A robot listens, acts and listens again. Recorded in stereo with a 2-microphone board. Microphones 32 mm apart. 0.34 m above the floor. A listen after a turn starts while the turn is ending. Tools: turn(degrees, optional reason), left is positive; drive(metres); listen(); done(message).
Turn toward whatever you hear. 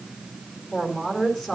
turn(degrees=20, reason="The woman speaking: about 20° left or 160° left.")
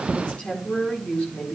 turn(degrees=130, reason="So it is at 130° left.")
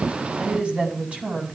turn(degrees=-45, reason="The woman speaking is now 45° right.")
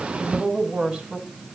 turn(degrees=-30, reason="The woman speaking is now 30° right.")
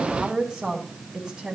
turn(degrees=-20, reason="The woman speaking is now 20° right.")
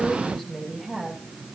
done("Facing the woman speaking, 2 to 4 m away.")